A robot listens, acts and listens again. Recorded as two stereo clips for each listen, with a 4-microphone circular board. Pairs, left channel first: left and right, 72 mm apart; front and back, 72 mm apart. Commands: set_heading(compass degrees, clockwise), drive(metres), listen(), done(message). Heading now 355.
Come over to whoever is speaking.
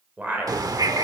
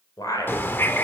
set_heading(20)
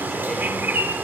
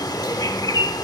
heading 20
listen()
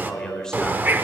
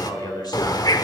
set_heading(10)
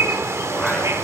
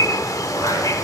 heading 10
listen()
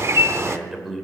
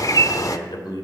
drive(1.0)
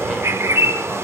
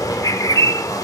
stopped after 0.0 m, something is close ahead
listen()
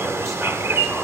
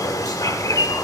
listen()
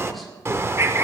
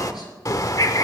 done("I heard a man speaking from this way, but can't make it out now. I did not reach it.")